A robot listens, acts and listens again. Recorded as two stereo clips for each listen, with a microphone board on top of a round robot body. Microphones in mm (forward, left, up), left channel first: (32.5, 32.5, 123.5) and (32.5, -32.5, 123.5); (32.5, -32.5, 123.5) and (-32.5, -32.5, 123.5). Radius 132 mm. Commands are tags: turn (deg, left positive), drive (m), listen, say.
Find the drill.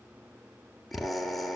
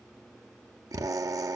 <turn deg="180"/>
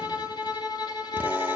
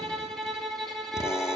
<listen/>
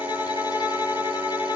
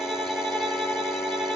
<listen/>
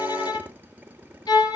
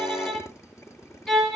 <turn deg="-30"/>
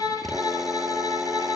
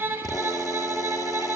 <listen/>
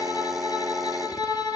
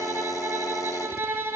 <say>Facing the drill, 1 to 2 m away.</say>